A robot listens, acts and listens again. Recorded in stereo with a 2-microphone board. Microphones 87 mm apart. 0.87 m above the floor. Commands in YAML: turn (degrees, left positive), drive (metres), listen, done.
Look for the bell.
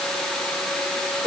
listen: true
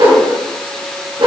listen: true
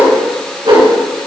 done: "I can't make out a bell, only a whoosh."